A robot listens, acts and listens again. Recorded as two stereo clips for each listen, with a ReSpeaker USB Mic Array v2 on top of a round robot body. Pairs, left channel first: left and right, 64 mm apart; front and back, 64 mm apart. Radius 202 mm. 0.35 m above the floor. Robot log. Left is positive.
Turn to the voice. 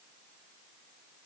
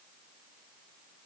cmd idle
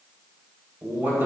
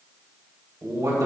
note: The man speaking: 150° right.
cmd yaw -150
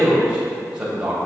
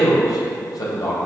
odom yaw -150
note: The man speaking is now 15° right.
cmd yaw -15
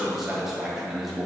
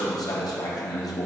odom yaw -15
end: Facing the man speaking, 2 to 4 m away.